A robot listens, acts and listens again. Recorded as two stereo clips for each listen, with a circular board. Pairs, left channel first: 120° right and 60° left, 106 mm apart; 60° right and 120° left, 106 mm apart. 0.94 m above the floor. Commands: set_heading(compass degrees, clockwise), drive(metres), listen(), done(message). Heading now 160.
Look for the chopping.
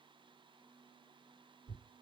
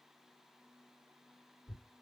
listen()
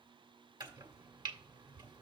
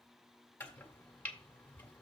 set_heading(145)
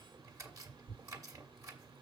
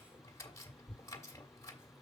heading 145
done("Facing the chopping.")